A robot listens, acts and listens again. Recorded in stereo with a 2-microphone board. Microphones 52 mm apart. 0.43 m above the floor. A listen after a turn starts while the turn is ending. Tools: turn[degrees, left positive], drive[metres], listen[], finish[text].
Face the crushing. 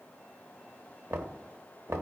Action: listen[]
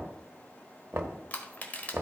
Thought: The crushing: about 30° left or 150° left.
Action: turn[30]
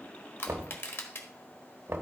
Thought: So it is at 115° left.
Action: turn[115]
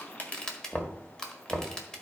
Thought: The crushing is now 15° left.
Action: turn[15]
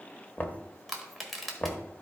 Action: finish[Facing the crushing, 1 to 2 m away.]